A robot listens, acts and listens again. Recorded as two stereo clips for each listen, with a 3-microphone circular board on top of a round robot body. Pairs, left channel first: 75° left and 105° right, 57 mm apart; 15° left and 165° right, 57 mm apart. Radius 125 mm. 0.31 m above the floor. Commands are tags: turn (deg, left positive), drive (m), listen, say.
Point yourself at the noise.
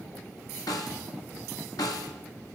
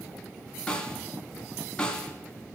<turn deg="90"/>
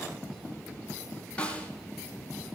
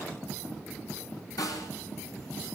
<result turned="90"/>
<say>Found it: a snare drum, straight ahead, 1 to 2 m away.</say>